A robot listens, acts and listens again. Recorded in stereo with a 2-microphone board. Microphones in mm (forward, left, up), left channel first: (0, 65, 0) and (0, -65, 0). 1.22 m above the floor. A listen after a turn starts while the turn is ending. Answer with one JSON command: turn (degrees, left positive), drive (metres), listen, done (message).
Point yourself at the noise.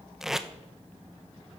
{"turn": -30}
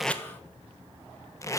{"turn": 25}
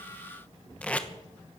{"turn": 10}
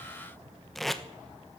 {"done": "Found it: tape being pulled, straight ahead, 1 to 2 m away."}